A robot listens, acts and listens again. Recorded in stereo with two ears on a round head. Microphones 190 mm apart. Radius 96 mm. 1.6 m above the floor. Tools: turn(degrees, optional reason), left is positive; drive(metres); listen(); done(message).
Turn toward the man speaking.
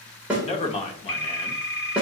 turn(degrees=25, reason="The man speaking: about 25° left or 155° left.")
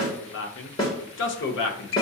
turn(degrees=125, reason="So it is at 125° left.")
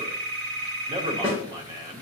turn(degrees=-20, reason="The man speaking is now 20° right.")
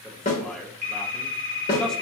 done("Facing the man speaking.")